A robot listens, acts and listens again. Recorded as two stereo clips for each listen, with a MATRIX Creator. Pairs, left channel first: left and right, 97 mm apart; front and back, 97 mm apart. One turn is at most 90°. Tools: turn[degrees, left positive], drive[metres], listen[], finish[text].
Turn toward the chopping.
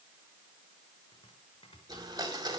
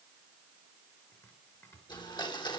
Thought: The chopping: 65° left.
Action: turn[65]
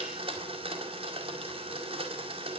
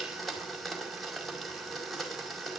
Action: listen[]
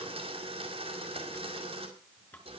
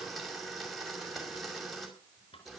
Thought: The chopping is now 20° left.
Action: turn[20]
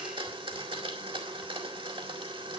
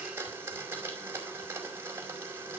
Action: listen[]
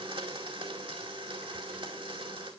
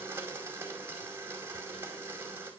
Action: listen[]
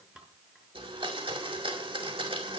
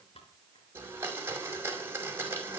Action: finish[Facing the chopping, over 4 m away.]